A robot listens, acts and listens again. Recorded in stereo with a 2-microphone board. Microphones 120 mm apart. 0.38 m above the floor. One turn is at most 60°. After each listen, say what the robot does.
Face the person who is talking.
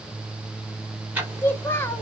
Turn 20° left.
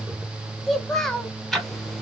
Facing the child speaking.